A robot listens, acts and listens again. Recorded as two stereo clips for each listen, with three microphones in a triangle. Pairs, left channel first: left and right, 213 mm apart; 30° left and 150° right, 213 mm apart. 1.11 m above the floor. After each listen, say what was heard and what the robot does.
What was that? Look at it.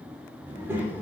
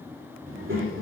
The child speaking: 170° right. Turn 170° right.
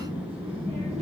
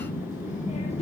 The child speaking is now 35° right. Turn 35° right.
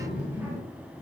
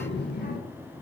The child speaking is now 15° right. Turn 15° right.
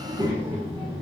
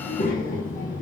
The child speaking is now 25° right. Turn 25° right.
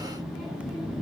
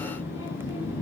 Found it: a child speaking, straight ahead.